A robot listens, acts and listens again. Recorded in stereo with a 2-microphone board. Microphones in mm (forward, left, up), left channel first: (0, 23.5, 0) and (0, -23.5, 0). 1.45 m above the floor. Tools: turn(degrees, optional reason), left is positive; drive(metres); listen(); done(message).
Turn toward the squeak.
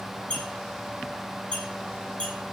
turn(degrees=25, reason="The squeak: about 25° left or 155° left.")
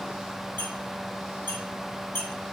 turn(degrees=130, reason="So it is at 130° left.")
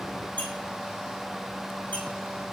listen()
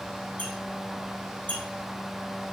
turn(degrees=40, reason="The squeak is now 40° left.")
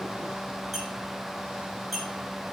done("Facing the squeak.")